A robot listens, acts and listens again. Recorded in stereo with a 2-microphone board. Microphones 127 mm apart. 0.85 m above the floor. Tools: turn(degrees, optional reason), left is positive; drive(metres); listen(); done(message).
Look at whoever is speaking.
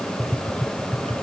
listen()
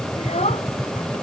turn(degrees=65, reason="The child speaking: about 65° left or 115° left.")
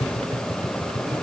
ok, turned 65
listen()
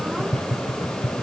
listen()
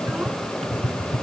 done("I heard a child speaking, but can't make it out now. It was about straight ahead or 50° left.")